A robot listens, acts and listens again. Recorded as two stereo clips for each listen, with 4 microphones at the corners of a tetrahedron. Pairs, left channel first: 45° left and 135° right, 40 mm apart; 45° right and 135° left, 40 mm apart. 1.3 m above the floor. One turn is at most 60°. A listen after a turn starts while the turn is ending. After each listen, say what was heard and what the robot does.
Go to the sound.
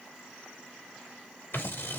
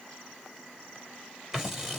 The scissors: 50° left. Turn 50° left.
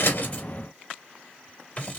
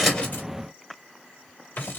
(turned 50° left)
The scissors is now 10° right. Turn 10° right.
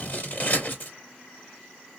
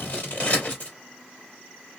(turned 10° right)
Drive 1.0 m forward.
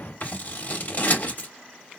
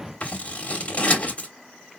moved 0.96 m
Drive 1.0 m forward.
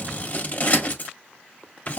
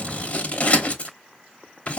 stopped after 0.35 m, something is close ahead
I am next to the scissors.